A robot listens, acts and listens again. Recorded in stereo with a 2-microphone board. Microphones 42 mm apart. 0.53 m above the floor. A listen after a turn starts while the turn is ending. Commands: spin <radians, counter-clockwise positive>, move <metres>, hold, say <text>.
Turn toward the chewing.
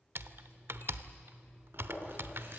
spin -1.13
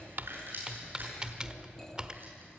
spin -0.87
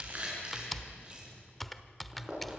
spin -0.44
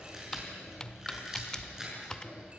spin -0.26
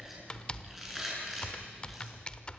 say Facing the chewing, over 4 m away.